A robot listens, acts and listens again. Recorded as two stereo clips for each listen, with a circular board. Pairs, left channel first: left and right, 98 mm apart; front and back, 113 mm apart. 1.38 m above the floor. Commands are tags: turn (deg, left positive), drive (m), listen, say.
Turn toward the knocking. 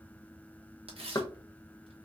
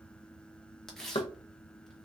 <turn deg="40"/>
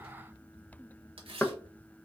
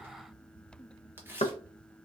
<turn deg="15"/>
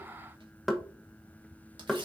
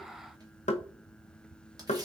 <say>Found it: knocking, straight ahead, under 1 m away.</say>